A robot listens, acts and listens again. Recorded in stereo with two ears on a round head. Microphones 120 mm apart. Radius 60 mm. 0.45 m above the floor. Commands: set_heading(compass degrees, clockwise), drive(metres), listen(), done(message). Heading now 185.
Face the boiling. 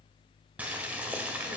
set_heading(215)
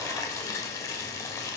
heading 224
set_heading(199)
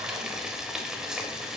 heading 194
done("Facing the boiling.")